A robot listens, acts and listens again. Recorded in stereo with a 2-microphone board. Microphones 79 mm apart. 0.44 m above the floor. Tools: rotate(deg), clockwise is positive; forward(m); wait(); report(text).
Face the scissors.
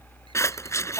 rotate(-40)
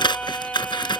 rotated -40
rotate(-100)
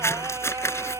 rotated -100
rotate(-35)
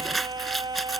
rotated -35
report("Found it: scissors, straight ahead.")